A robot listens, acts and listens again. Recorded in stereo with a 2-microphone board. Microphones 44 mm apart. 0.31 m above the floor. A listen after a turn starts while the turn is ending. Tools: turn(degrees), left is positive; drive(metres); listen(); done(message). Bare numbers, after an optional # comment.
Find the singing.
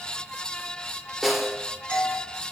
listen()
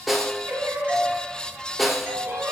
# The singing: about 70° right or 110° right.
turn(-70)
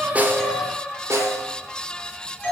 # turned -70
done("Facing the singing.")